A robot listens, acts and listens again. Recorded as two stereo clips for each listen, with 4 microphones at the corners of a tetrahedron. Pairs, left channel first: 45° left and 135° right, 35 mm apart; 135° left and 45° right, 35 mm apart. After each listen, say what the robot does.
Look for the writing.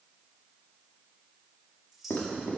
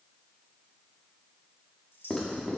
Turn 60° left.
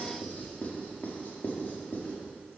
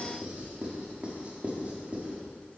Turn 10° left.
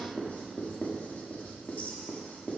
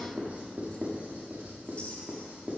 Found it: writing, straight ahead, 1 to 2 m away.